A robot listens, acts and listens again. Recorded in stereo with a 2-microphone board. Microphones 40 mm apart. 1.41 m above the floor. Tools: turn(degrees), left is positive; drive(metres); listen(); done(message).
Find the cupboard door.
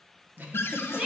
turn(degrees=90)
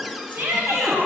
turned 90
done("Found it: a cupboard door, straight ahead.")